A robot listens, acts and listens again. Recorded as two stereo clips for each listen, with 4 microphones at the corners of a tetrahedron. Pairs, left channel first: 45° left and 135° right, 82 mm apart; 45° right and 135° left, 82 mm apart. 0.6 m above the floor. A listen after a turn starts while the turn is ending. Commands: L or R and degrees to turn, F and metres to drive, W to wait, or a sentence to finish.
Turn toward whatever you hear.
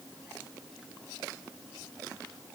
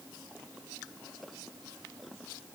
W
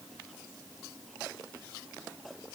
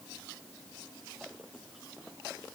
W
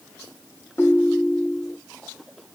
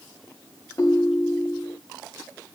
R10
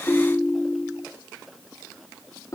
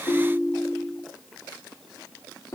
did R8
Facing the ringtone.